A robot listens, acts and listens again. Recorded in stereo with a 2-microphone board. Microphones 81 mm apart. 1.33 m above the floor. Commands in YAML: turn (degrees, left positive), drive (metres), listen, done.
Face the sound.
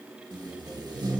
turn: -60
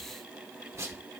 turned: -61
turn: -40
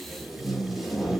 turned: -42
done: "Found it: tape being pulled, straight ahead, 1 to 2 m away."